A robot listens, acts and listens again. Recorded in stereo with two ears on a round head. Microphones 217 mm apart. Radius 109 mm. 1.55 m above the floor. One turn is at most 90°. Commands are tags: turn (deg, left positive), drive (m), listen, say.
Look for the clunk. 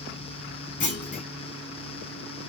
<turn deg="35"/>
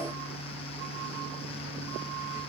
<listen/>
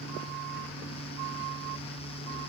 <say>I heard a clunk, but can't make it out now. It was about straight ahead or 110° left.</say>